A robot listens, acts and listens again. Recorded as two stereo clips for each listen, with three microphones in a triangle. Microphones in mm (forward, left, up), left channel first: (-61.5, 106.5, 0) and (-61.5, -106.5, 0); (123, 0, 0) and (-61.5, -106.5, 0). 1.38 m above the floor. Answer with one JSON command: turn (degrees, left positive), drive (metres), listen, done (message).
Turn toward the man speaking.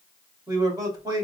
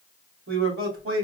{"turn": -160}
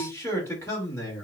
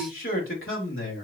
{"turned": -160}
{"turn": 15}
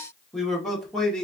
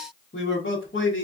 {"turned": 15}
{"done": "Facing the man speaking."}